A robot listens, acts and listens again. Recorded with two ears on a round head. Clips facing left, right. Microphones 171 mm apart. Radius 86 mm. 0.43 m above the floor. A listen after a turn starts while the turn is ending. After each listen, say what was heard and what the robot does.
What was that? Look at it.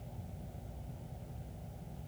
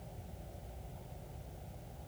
Keep listening.
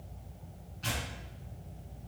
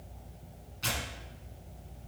The tearing paper: about 70° right or 110° right. Turn 70° right.
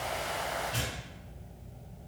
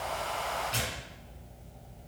So it is at 45° right. Turn 45° right.
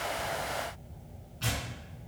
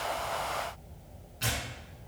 The tearing paper is now 20° right. Turn 20° right.
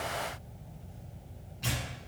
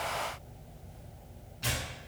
Facing the tearing paper, 1 to 2 m away.